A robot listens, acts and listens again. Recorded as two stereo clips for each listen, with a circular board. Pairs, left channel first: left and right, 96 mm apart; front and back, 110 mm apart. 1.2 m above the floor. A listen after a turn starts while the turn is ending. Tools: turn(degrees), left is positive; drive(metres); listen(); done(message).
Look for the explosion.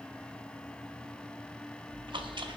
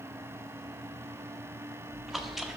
listen()
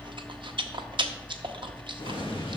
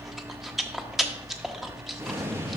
turn(degrees=115)
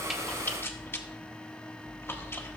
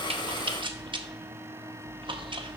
done("Facing where the explosion came from. I can't hear it now.")